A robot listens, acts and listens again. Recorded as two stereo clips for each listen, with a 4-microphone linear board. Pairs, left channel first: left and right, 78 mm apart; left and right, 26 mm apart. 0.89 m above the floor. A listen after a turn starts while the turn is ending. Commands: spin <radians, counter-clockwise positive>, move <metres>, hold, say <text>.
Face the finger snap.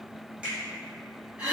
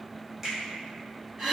spin -0.26
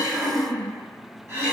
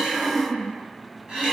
hold
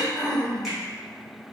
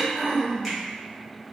hold
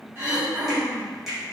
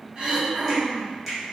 say Found it: a finger snap, straight ahead.